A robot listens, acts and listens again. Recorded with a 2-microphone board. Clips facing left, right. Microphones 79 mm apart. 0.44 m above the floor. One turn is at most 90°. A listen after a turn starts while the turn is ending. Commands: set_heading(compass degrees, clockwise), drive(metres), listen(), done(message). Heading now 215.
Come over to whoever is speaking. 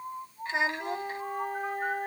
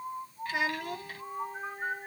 set_heading(190)
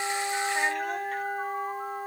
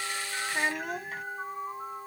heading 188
listen()
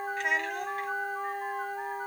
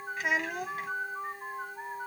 drive(1.0)
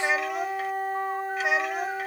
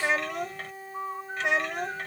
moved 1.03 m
drive(1.0)
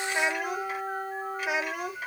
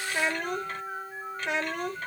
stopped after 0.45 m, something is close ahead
set_heading(178)
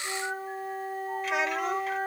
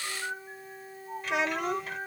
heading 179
done("Arrived at the child speaking, straight ahead.")